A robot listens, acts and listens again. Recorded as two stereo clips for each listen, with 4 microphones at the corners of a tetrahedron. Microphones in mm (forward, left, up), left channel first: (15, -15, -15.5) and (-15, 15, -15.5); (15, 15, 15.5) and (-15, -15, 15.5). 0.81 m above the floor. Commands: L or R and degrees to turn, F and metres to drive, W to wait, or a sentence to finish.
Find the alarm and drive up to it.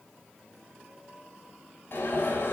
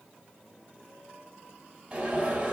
R85
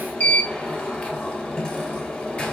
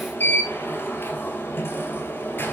L15
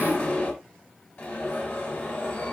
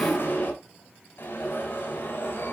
F1.0
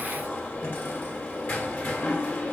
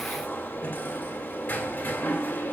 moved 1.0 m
F1.0
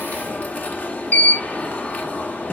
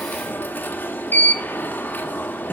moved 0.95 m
F1.0
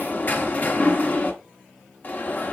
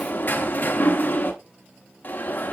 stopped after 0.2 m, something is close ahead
I am next to the alarm.